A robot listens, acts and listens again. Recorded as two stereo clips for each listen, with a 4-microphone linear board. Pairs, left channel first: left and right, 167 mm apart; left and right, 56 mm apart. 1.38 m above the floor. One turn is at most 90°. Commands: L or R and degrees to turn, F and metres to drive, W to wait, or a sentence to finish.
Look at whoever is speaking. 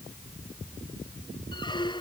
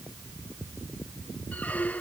W
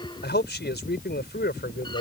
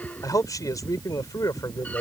L90
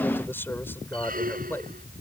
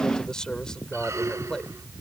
L15
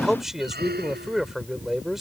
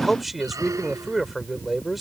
Found it: a man speaking, straight ahead.